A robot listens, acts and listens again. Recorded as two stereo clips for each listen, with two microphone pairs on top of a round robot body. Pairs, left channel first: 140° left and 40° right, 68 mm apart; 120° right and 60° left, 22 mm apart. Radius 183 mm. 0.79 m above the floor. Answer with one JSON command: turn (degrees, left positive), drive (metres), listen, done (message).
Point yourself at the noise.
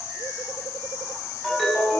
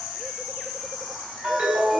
{"turn": 50}
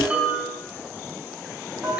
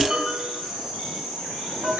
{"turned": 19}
{"turn": 30}
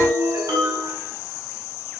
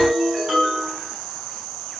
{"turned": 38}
{"done": "Facing the ringtone, over 4 m away."}